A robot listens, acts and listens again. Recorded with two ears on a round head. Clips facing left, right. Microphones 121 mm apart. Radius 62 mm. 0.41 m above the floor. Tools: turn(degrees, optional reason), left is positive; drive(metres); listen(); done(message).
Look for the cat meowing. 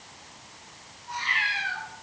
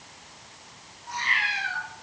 turn(degrees=-65, reason="The cat meowing: about 65° right or 115° right.")
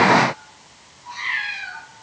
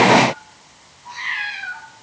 turn(degrees=-45, reason="So it is at 45° right.")
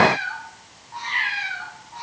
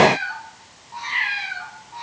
turn(degrees=-10, reason="The cat meowing is now 10° right.")
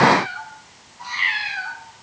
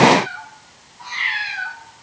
done("Facing the cat meowing.")